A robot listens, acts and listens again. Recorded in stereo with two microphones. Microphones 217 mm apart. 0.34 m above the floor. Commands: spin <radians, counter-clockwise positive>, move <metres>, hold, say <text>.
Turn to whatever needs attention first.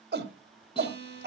spin -0.87
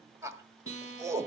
spin -0.26
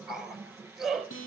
say Found it: a shout, straight ahead.